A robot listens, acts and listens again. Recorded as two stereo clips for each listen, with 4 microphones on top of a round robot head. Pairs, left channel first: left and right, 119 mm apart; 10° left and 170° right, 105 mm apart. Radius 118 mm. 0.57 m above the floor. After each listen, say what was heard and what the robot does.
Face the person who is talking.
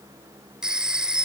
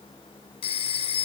Keep listening.
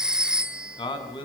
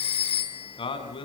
The man speaking: 45° left. Turn 45° left.
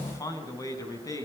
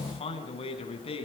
The man speaking is now 30° left. Turn 30° left.
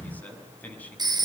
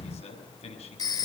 The man speaking is now 15° left. Turn 15° left.
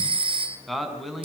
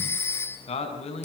Facing the man speaking, over 4 m away.